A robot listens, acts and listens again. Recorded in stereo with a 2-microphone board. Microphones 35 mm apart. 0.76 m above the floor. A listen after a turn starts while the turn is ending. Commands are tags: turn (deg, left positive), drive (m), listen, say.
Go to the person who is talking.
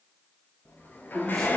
<turn deg="30"/>
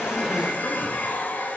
<listen/>
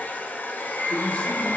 <listen/>
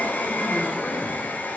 <say>I heard a man speaking, but can't make it out now. It was about 20° right or 140° left. I did not reach it.</say>